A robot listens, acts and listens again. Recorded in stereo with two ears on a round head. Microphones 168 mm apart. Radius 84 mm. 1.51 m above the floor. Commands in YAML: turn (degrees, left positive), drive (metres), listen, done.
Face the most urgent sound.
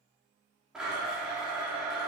listen: true
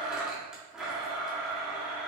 listen: true
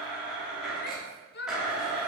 turn: 60
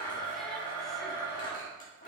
listen: true
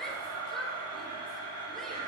listen: true
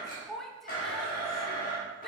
done: "Found it: a shout, straight ahead, under 1 m away."